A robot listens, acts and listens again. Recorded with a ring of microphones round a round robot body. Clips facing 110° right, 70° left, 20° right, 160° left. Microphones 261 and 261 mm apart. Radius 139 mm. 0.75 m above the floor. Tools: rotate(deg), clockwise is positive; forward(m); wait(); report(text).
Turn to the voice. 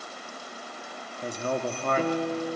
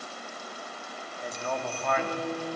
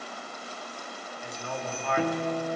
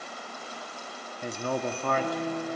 rotate(160)
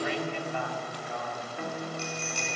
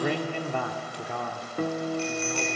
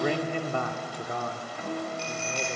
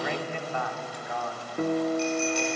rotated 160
rotate(-35)
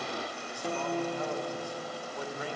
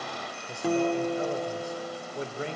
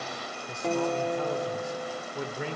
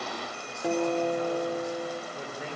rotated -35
report("Facing the man speaking, 2 to 4 m away.")